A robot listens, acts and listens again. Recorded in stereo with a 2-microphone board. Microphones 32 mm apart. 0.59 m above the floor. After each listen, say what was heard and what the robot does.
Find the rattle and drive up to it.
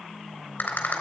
The rattle: about 55° left or 125° left. Turn 55° left.
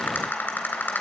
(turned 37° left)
So it is at 85° left. Turn 85° left.
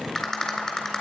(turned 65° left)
The rattle is now 20° left. Turn 20° left.
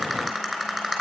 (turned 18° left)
Drive 1.0 m forward.
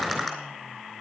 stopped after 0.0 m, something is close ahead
Something is in my way. I am facing the rattle but have not reached it.